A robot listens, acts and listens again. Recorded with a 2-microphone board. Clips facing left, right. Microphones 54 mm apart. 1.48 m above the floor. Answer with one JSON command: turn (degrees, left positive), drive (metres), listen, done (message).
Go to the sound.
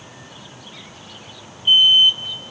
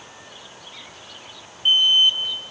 {"turn": -90}
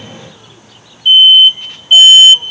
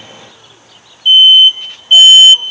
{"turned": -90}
{"drive": 1.0}
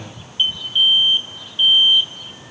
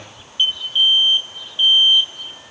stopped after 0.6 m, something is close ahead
{"done": "Blocked. The alarm is further on, straight ahead."}